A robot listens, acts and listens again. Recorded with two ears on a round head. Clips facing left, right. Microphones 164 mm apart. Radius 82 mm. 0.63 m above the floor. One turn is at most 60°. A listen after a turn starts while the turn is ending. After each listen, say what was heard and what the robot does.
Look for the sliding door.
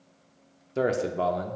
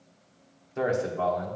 Keep listening.
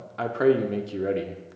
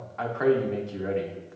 Keep listening.
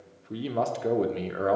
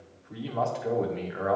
I can't make out a sliding door to turn to.